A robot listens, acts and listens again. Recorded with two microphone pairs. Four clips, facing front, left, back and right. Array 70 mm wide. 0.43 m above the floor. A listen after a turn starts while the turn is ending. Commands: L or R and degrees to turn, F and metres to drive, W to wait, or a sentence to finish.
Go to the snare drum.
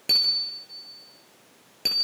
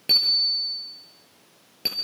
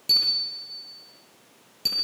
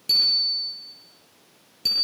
W
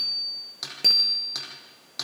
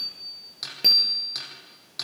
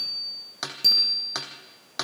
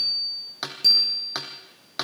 R125
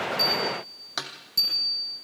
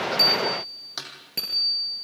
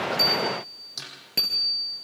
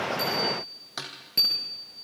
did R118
F1.0
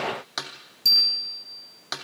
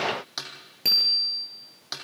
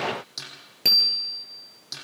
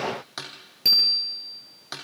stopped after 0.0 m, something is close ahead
R10
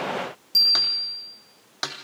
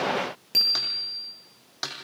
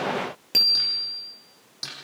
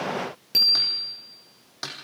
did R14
Blocked. The snare drum is further on, straight ahead.